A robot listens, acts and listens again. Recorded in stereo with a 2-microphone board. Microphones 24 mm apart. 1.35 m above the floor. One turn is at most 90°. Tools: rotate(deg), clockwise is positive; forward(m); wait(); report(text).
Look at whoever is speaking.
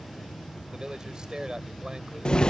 rotate(35)
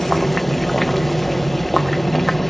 wait()
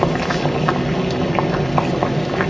wait()
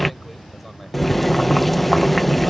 report("I heard a man speaking, but can't make it out now. It was about straight ahead or 110° right.")